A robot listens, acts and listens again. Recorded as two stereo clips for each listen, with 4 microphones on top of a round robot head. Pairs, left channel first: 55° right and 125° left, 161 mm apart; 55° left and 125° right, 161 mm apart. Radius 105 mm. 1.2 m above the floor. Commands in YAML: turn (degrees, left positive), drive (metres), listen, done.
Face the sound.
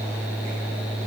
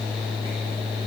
listen: true
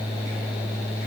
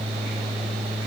listen: true
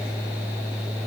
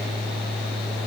done: "I can't make out anything."